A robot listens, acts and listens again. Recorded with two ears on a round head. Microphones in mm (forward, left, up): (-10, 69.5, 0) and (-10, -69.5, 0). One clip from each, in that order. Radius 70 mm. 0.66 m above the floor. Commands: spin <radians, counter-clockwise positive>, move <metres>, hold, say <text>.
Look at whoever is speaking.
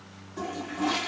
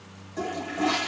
hold
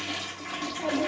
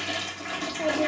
spin -0.70
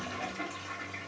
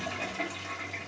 say Found it: a child speaking, straight ahead.